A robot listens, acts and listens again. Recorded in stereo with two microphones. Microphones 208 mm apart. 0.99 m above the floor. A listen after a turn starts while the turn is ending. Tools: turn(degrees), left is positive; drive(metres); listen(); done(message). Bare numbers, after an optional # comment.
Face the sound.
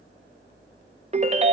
# The ringtone: about 35° right or 145° right.
turn(-35)
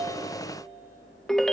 done("Facing the ringtone, under 1 m away.")